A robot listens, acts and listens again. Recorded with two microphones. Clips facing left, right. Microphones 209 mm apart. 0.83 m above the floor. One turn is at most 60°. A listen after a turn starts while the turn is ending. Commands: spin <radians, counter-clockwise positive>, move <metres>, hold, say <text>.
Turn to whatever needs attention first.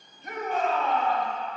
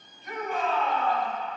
spin 0.96
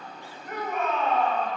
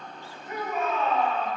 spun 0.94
spin 1.05
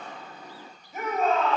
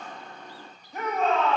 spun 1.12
say Found it: a shout, straight ahead.